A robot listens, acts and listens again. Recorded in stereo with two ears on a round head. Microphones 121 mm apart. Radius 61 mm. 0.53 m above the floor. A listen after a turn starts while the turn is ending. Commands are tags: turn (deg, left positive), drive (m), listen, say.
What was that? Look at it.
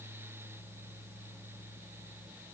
<listen/>
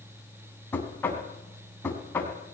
<turn deg="15"/>
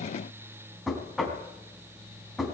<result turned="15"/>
<say>Facing the knocking, 2 to 4 m away.</say>